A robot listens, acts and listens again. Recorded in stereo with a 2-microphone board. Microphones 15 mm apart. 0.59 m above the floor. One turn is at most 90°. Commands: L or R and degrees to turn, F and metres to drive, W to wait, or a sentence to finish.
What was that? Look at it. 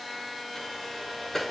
L30
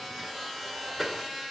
Found it: a sliding door, straight ahead.